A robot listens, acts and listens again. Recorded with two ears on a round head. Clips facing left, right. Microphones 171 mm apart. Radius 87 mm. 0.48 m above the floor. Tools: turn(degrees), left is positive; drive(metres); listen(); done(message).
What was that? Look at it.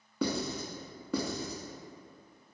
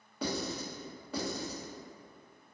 turn(degrees=75)
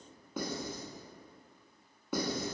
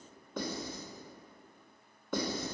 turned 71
turn(degrees=10)
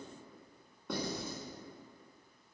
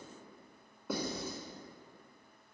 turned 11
done("Facing the writing, under 1 m away.")